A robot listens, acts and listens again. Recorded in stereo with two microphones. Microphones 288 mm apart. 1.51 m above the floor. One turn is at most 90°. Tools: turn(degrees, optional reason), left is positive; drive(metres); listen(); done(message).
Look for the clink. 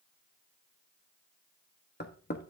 listen()
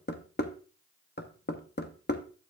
listen()
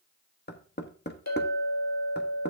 turn(degrees=65, reason="The clink: about 65° left or 115° left.")
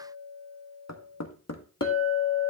turn(degrees=15, reason="So it is at 15° left.")
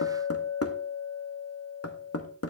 done("Facing the clink, 1 to 2 m away.")